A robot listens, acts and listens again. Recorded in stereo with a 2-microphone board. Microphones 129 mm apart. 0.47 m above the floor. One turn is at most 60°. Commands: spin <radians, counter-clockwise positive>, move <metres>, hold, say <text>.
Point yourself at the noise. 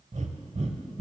spin -1.05
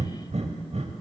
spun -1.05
spin -1.05
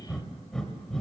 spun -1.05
say Found it: breathing, straight ahead, under 1 m away.